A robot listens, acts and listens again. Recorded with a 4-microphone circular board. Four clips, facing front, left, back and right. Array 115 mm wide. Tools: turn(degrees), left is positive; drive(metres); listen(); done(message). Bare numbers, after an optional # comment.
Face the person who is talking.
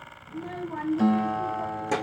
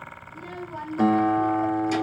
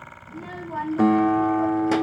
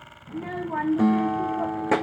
# The child speaking: 100° right.
turn(-100)
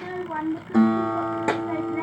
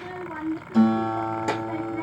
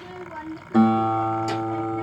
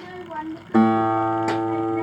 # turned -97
done("Found it: a child speaking, straight ahead.")